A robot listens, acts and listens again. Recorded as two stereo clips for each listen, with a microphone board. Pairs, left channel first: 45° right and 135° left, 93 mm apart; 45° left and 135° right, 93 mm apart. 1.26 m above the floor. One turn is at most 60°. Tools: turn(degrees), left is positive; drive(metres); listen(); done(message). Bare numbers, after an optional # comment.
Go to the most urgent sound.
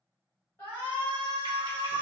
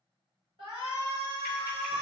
# The shout: 115° right.
turn(-60)
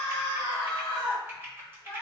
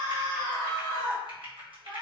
# The shout is now 75° right.
turn(-60)
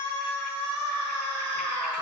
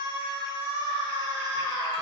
# The shout is now 40° right.
turn(-40)
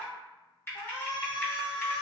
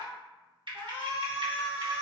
# The shout is now 20° right.
turn(-20)
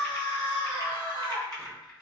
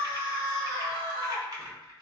drive(1.0)
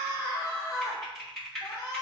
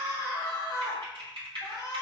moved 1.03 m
drive(1.0)
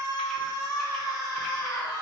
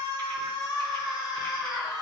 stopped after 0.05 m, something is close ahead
done("I am next to the shout.")